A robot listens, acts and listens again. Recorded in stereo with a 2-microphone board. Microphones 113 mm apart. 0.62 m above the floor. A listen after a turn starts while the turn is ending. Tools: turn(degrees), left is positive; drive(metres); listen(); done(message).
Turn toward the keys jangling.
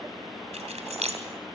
turn(degrees=-90)
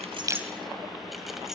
listen()
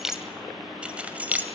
turn(degrees=-15)
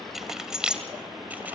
turn(degrees=-10)
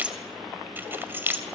turn(degrees=-20)
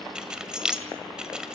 done("Facing the keys jangling.")